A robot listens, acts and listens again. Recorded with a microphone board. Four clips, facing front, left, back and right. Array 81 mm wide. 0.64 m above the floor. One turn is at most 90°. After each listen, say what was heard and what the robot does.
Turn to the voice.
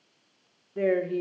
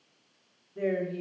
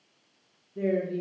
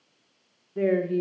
The woman speaking: 30° right. Turn 30° right.
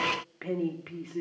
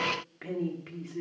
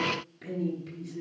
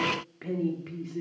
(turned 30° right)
Facing the woman speaking.